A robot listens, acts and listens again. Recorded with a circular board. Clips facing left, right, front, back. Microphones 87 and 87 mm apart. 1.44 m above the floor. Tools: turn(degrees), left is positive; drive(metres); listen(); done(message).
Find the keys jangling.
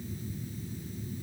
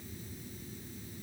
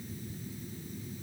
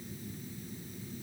listen()
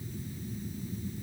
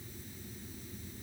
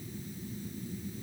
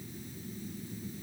listen()
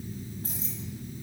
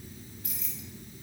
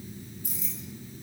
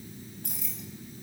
turn(degrees=150)
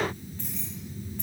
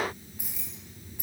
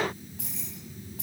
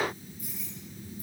turn(degrees=-10)
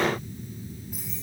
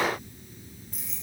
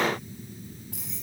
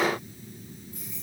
done("Facing the keys jangling, over 4 m away.")